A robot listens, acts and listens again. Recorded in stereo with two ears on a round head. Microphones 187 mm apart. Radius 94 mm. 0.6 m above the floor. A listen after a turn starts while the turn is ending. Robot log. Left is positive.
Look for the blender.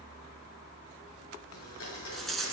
cmd yaw +90
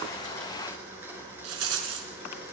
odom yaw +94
note: So it is at 10° right.
cmd yaw -10
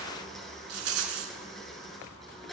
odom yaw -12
end: Facing the blender.